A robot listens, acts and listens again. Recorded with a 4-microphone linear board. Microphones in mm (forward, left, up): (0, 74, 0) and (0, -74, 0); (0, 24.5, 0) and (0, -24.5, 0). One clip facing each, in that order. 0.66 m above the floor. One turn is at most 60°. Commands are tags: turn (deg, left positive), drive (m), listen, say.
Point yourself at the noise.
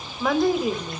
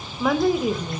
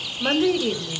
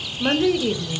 <turn deg="30"/>
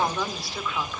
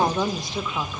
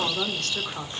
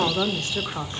<turn deg="-20"/>
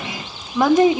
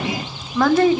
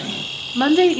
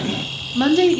<turn deg="20"/>
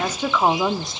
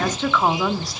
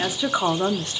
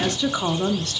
<turn deg="25"/>
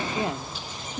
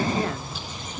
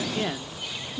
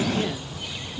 <turn deg="30"/>
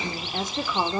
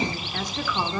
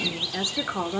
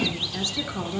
<turn deg="25"/>
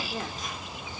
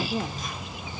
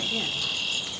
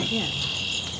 <turn deg="-10"/>
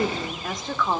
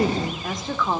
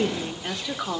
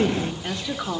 <say>Found it: a woman speaking, straight ahead.</say>